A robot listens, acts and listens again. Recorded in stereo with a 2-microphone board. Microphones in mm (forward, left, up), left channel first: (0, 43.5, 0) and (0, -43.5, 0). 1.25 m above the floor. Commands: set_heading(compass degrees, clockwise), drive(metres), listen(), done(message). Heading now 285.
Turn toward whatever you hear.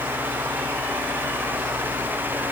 listen()
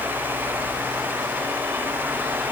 listen()
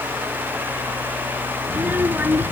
set_heading(305)
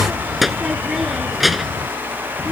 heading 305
set_heading(275)
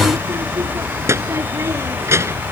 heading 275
set_heading(305)
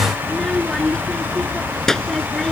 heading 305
done("Found it: a child speaking, straight ahead.")